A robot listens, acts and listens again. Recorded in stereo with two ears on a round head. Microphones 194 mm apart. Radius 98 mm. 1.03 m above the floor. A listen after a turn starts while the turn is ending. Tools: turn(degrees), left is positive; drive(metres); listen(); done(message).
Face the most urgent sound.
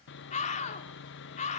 turn(degrees=35)
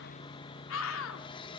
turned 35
turn(degrees=105)
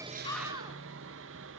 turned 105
listen()
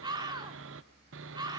turn(degrees=-20)
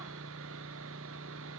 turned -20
listen()
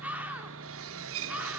done("Found it: a scream, straight ahead, 2 to 4 m away.")